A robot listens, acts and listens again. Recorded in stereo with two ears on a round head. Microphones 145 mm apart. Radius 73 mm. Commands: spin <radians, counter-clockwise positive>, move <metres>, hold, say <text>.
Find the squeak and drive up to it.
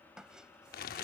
spin -0.52
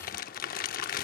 hold
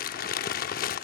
hold
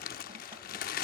say I heard a squeak, but can't make it out now. It was about 25° left or 145° right. I did not reach it.